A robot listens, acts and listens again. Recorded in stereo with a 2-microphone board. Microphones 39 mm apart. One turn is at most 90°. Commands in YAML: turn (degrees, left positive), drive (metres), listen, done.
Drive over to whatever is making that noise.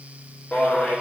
turn: 30
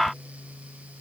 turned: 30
turn: 90
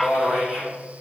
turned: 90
drive: 1.0
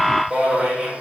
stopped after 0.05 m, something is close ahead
turn: -10
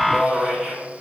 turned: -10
done: "Blocked. The man speaking is further on, straight ahead."